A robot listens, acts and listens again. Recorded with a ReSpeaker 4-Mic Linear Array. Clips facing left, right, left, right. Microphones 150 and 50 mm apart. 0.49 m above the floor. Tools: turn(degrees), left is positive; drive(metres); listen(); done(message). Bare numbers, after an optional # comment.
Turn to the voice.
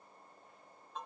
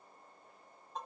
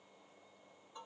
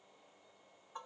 listen()
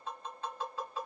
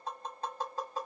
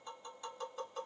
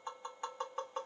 listen()
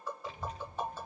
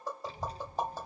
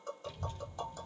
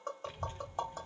# The child speaking: about 35° right or 145° right.
turn(-35)
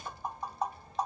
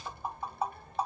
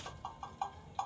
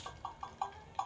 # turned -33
# So it is at 105° right.
turn(-105)
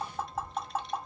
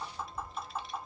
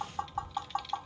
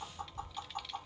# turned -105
done("Facing the child speaking, under 1 m away.")